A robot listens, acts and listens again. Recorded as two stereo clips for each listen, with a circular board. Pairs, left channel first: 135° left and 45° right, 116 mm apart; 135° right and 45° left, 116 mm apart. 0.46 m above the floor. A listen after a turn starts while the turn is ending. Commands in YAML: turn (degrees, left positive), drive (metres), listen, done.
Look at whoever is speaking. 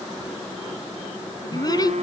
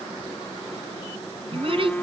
turn: 80
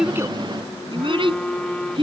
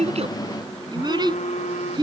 done: "Found it: a child speaking, straight ahead."